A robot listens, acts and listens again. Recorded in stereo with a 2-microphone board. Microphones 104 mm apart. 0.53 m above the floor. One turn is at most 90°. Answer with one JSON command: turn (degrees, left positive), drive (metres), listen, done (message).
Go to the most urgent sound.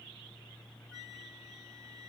{"listen": true}
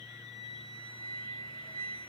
{"listen": true}
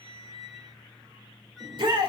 {"turn": -50}
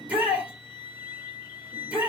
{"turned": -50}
{"turn": -15}
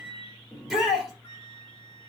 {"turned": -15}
{"drive": 1.0}
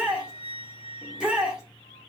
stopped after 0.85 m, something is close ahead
{"turn": -10}
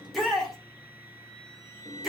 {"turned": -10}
{"done": "I am next to the shout."}